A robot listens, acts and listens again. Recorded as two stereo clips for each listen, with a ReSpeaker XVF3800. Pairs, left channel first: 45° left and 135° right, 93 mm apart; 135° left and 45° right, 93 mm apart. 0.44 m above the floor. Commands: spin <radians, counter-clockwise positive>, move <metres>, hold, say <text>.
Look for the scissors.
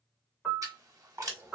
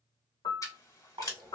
spin 3.14
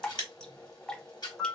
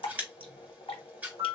spin 0.44
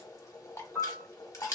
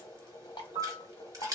say Facing the scissors, 1 to 2 m away.